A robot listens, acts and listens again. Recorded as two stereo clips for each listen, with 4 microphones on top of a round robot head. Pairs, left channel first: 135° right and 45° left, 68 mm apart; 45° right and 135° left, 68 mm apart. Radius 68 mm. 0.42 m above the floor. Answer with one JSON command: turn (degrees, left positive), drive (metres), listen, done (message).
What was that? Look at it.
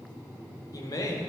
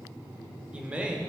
{"turn": -150}
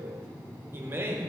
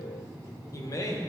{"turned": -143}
{"turn": -10}
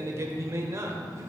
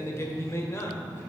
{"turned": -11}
{"done": "Facing the man speaking, 1 to 2 m away."}